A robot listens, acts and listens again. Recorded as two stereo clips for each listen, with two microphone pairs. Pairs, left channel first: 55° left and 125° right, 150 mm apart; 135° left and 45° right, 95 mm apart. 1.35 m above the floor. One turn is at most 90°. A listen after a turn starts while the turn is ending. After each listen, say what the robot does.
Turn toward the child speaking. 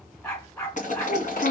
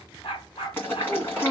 Turn 40° left.
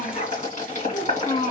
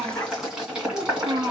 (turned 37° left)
Found it: a child speaking, straight ahead.